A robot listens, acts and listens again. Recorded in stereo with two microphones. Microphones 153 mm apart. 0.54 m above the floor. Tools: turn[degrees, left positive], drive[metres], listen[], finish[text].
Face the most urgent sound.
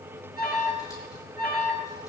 Thought: The alarm: about 75° left or 105° left.
Action: turn[75]
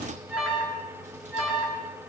Action: finish[Facing the alarm, over 4 m away.]